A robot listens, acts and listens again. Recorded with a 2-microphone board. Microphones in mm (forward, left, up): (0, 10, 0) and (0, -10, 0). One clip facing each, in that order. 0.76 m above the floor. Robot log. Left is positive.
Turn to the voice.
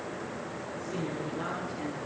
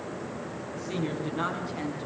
cmd yaw -90
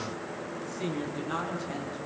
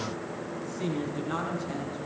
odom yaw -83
end: Facing the woman speaking, over 4 m away.